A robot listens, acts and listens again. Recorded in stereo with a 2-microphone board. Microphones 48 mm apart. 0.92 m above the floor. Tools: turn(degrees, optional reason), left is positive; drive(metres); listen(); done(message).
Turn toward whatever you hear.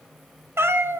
turn(degrees=-55, reason="The cat meowing: about 55° right or 125° right.")
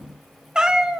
turn(degrees=-20, reason="So it is at 20° right.")
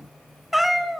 done("Found it: a cat meowing, straight ahead.")